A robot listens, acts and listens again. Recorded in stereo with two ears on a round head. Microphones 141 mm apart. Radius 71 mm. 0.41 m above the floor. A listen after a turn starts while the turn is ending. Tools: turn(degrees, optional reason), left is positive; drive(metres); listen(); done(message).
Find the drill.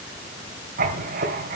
listen()
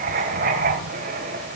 listen()
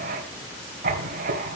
done("I can't make out a drill to turn to.")